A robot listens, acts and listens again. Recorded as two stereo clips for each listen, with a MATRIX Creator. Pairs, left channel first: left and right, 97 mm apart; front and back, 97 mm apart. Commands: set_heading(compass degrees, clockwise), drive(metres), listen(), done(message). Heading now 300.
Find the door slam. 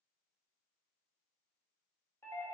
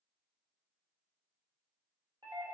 listen()
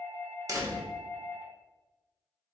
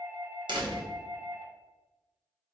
set_heading(85)
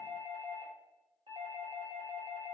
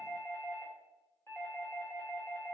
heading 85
done("Facing where the door slam came from. I can't hear it now.")